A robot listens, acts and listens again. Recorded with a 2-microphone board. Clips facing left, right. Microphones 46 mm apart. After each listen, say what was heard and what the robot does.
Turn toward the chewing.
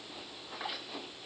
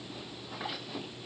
Keep listening.
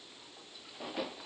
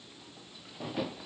Keep listening.
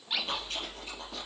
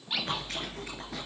The chewing: about 70° right or 110° right. Turn 70° right.
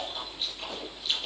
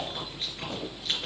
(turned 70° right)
So it is at 40° right. Turn 40° right.
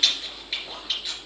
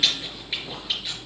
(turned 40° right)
Facing the chewing.